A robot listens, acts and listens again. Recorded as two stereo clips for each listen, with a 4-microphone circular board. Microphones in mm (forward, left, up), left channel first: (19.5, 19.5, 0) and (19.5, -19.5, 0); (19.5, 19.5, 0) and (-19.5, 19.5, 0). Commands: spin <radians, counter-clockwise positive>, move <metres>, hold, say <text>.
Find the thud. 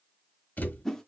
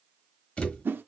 spin 0.96
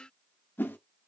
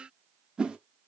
say I heard a thud from this way, but can't make it out now.